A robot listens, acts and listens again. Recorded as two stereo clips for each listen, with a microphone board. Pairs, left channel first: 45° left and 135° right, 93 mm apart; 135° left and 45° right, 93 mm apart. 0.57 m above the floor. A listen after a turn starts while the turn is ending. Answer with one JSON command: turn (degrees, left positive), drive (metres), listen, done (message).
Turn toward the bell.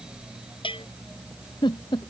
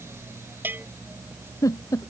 {"turn": 25}
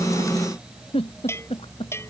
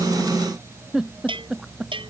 {"turn": -20}
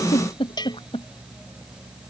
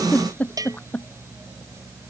{"done": "Found it: a bell, straight ahead."}